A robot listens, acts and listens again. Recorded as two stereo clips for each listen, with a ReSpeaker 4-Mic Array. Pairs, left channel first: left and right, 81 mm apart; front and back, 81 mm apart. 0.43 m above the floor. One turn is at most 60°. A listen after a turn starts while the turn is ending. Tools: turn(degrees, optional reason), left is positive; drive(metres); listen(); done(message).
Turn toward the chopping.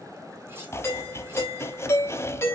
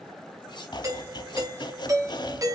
turn(degrees=30, reason="The chopping: 30° left.")
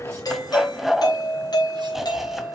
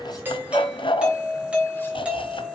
done("Found it: chopping, straight ahead, under 1 m away.")